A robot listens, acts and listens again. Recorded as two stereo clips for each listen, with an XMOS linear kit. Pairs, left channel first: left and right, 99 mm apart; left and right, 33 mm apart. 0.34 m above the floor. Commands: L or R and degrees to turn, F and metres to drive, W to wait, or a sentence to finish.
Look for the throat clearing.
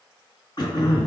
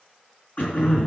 L50
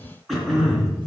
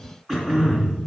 Facing the throat clearing.